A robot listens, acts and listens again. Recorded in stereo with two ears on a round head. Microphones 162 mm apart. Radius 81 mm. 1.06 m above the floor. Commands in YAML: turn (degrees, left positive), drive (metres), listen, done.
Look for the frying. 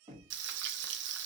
turn: -65
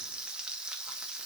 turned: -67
done: "Facing the frying, under 1 m away."